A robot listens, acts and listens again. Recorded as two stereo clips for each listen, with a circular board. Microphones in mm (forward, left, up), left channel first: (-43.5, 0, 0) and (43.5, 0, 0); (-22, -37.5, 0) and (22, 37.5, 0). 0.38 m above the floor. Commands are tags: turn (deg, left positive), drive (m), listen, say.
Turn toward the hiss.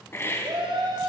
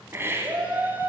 <turn deg="120"/>
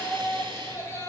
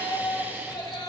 <listen/>
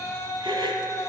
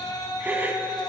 <turn deg="-10"/>
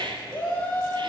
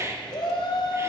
<say>Found it: a hiss, straight ahead.</say>